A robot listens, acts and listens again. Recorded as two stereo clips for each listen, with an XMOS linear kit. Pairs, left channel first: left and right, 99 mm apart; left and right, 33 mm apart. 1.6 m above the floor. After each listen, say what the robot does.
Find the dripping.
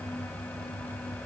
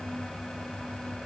Keep listening.
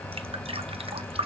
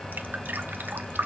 Turn 70° right.
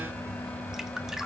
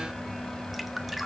Facing the dripping.